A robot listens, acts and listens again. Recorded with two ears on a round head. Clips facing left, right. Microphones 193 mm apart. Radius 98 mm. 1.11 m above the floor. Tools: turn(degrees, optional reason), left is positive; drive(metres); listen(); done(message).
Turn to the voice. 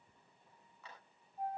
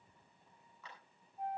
listen()
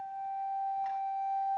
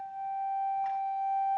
listen()
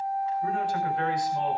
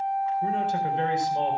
turn(degrees=-20, reason="The man speaking: about 20° right or 160° right.")
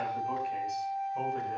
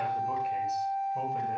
turn(degrees=-30)
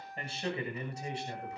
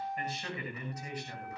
turn(degrees=25, reason="So it is at 25° left.")
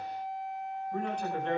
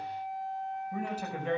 done("Facing the man speaking, over 4 m away.")